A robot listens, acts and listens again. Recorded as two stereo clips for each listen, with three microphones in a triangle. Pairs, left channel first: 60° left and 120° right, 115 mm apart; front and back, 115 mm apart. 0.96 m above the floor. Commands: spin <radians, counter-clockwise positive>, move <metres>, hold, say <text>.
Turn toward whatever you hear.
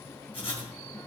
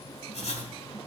spin 0.44
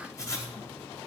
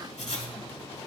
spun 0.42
say Found it: writing, straight ahead, 1 to 2 m away.